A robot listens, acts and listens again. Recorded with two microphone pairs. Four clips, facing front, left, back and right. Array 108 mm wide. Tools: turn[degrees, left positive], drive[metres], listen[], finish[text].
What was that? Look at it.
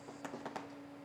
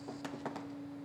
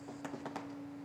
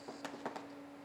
Action: listen[]
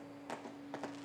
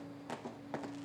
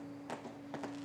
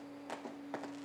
Action: listen[]
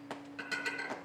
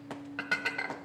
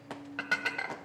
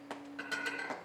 Thought: The dishes clattering: 145° left.
Action: turn[145]
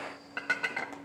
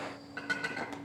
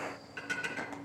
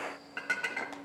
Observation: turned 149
Action: finish[Found it: dishes clattering, straight ahead.]